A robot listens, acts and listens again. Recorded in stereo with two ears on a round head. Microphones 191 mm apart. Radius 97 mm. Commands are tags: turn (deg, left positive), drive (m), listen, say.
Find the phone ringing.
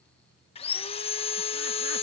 <listen/>
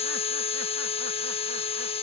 <listen/>
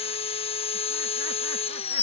<say>I can't make out a phone ringing to turn to.</say>